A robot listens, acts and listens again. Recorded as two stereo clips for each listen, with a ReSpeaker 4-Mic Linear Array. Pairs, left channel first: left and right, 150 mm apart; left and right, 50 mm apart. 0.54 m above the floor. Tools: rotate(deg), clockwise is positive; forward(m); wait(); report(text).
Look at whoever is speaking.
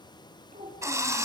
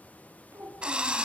rotate(70)
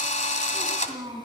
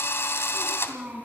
rotate(35)
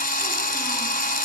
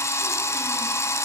wait()
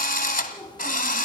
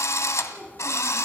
rotate(-20)
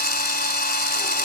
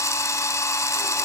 wait()
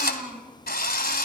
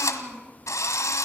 report("Found it: a child speaking, straight ahead.")